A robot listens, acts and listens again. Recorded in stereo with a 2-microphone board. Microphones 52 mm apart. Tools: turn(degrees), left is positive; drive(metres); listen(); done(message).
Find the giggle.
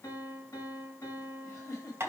turn(degrees=75)
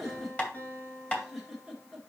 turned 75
done("Found it: a giggle, straight ahead.")